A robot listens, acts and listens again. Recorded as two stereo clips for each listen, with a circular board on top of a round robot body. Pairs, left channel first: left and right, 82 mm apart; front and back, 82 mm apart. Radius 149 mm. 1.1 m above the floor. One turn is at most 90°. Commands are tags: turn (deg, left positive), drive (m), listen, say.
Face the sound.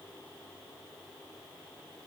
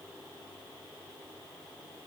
<listen/>
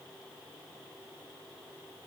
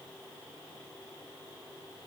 <listen/>
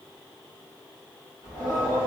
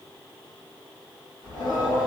<turn deg="-35"/>
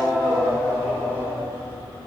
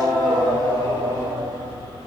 <turn deg="20"/>
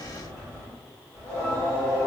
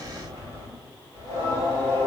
<turn deg="10"/>
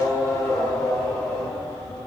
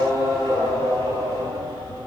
<say>Found it: singing, straight ahead.</say>